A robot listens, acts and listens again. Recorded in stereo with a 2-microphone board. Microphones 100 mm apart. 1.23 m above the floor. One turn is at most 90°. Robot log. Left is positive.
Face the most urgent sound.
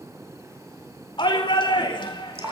note: The shout: about 55° left or 125° left.
cmd yaw +55
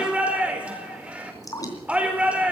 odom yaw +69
note: So it is at 15° right.
cmd yaw -15
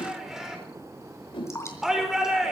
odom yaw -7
end: Facing the shout.